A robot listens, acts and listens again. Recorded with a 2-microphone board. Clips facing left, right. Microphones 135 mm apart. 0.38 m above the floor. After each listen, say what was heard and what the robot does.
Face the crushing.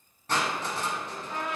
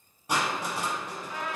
Turn 30° right.
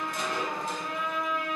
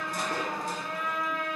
Keep listening.
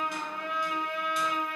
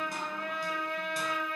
Keep listening.
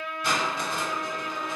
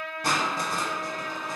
So it is at 135° right. Turn 135° right.
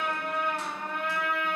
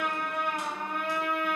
Keep listening.
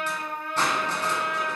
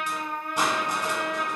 The crushing is now 15° right. Turn 15° right.
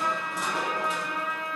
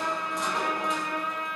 Keep listening.
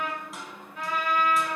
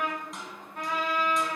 Facing the crushing, under 1 m away.